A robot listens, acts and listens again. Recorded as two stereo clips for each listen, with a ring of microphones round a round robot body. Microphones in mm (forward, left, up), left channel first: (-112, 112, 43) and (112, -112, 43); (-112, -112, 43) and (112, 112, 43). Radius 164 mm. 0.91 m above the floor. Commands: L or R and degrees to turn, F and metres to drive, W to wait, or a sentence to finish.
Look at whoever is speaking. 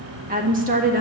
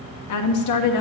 R110
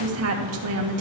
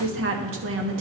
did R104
Found it: a woman speaking, straight ahead, 1 to 2 m away.